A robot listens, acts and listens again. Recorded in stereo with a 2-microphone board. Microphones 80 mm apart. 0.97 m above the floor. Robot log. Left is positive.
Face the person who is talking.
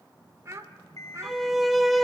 note: The child speaking: about 40° right or 140° right.
cmd yaw -40
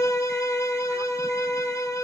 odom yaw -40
cmd idle
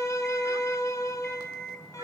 cmd idle
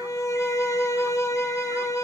end: I heard a child speaking, but can't make it out now. It was about straight ahead or 100° right.